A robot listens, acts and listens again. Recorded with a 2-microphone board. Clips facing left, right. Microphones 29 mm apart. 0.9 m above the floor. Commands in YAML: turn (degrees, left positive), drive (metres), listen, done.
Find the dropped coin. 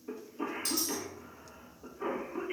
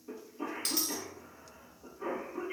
turn: -70
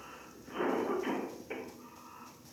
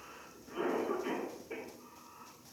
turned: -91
listen: true
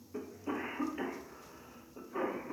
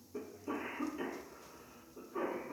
done: "I heard a dropped coin, but can't make it out now. It was about 20° left or 20° right."